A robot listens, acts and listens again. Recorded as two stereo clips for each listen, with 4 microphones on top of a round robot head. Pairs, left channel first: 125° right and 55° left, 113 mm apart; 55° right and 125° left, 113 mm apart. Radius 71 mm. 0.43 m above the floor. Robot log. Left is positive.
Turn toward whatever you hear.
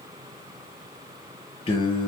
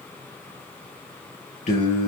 note: The singing: 80° right.
cmd yaw -80
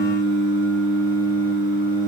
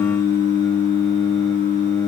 end: Facing the singing.